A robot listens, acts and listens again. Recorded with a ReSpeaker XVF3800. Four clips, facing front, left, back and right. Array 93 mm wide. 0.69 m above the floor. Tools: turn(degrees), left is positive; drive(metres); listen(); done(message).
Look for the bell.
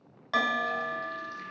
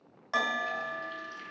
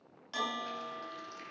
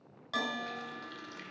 turn(degrees=20)
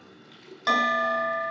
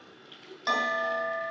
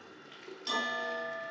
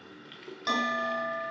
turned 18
done("Found it: a bell, straight ahead, 1 to 2 m away.")